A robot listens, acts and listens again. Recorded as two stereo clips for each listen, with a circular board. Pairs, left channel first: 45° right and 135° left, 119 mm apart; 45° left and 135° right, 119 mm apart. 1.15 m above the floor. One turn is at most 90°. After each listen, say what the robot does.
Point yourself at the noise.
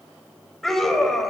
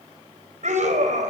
Turn 90° right.
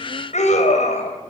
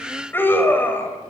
Turn 30° right.
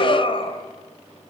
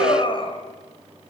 Found it: a scream, straight ahead, over 4 m away.